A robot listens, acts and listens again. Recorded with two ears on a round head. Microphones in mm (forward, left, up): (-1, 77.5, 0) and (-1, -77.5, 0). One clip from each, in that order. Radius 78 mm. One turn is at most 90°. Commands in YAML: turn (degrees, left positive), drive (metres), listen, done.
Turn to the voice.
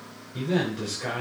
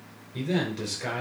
turn: -20
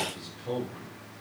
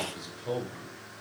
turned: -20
turn: -90
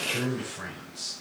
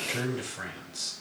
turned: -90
turn: -85
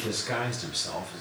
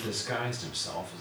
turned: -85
done: "Facing the man speaking, over 4 m away."